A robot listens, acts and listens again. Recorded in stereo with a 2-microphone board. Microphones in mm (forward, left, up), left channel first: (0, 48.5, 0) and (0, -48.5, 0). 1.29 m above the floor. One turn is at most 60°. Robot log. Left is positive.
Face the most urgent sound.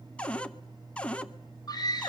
note: The scream: about 45° left or 135° left.
cmd yaw +45
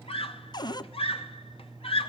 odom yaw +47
note: So it is at 90° left.
cmd yaw +60
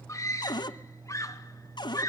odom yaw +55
note: The scream is now 35° left.
cmd yaw +35
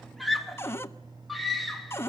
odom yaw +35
end: Found it: a scream, straight ahead, 2 to 4 m away.